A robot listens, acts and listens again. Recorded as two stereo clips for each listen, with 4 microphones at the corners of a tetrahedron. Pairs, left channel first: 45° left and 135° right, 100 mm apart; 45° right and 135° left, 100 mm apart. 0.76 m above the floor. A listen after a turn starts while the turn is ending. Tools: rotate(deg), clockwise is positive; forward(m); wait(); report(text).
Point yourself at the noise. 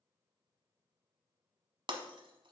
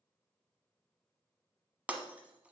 rotate(150)
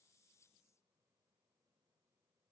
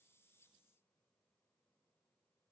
report("Facing where the breaking glass came from. I can't hear it now.")